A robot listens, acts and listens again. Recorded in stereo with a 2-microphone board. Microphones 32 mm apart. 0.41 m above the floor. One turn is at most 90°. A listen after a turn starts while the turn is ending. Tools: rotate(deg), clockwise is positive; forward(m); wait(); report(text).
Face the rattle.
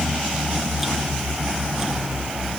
wait()
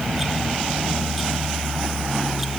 wait()
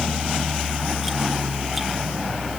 report("I can't make out a rattle to turn to.")